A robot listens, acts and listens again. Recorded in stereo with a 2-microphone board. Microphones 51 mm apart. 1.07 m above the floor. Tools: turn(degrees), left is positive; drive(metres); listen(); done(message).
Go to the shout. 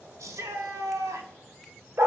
turn(degrees=-90)
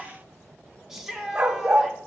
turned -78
turn(degrees=-10)
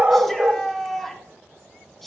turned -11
drive(metres=1.0)
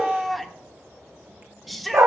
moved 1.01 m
drive(metres=1.0)
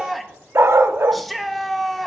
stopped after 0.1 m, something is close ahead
done("I am next to the shout.")